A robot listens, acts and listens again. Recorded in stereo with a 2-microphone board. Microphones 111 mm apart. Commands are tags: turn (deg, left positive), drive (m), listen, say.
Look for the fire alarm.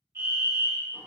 <turn deg="-25"/>
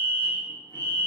<turn deg="-130"/>
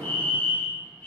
<turn deg="25"/>
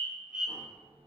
<turn deg="-10"/>
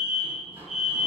<say>Facing the fire alarm, 1 to 2 m away.</say>